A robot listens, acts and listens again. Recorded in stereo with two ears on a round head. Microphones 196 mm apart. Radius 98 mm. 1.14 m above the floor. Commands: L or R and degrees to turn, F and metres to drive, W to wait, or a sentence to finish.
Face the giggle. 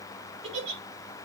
R60
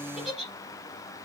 Found it: a giggle, straight ahead, over 4 m away.